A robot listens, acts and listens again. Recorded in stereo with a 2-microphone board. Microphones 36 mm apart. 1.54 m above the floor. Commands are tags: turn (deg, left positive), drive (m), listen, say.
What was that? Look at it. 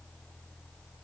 <listen/>
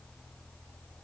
<listen/>
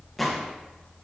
<turn deg="30"/>
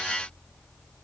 <listen/>
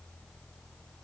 <say>I heard a gunshot, but can't make it out now. It was about 25° right or 145° left.</say>